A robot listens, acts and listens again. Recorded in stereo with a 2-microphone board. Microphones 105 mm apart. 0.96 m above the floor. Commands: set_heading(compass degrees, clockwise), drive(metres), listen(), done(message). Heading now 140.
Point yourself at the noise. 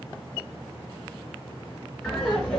set_heading(110)
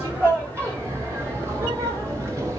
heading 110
set_heading(140)
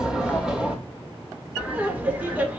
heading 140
set_heading(155)
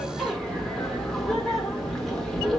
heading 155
done("Found it: laughter, straight ahead.")